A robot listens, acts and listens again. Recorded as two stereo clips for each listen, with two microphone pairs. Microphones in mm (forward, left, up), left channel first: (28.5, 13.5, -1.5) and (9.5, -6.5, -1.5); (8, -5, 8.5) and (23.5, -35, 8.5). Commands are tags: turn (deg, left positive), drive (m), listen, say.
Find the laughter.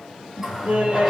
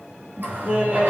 <turn deg="-95"/>
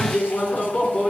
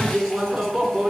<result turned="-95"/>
<say>Found it: laughter, straight ahead.</say>